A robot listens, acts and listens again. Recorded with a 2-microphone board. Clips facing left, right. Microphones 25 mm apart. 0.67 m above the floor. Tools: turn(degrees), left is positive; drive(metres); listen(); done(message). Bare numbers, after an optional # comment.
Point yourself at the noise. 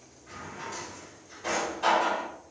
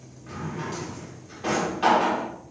# The drawer: about 55° right or 125° right.
turn(-55)
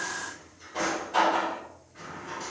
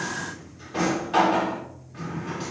# So it is at 70° right.
turn(-70)
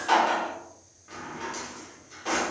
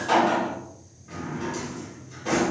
# The drawer is now 20° left.
turn(20)
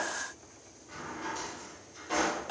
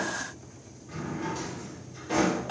done("Facing the drawer.")